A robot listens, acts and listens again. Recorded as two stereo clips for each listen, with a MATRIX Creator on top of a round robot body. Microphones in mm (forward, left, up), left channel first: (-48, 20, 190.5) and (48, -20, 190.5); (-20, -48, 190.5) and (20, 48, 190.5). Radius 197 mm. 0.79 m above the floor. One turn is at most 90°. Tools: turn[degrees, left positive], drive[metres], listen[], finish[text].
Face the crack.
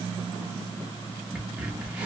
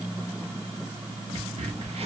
Thought: The crack: 55° left.
Action: turn[55]
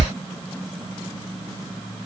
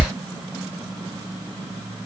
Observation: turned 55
Action: finish[Facing the crack, under 1 m away.]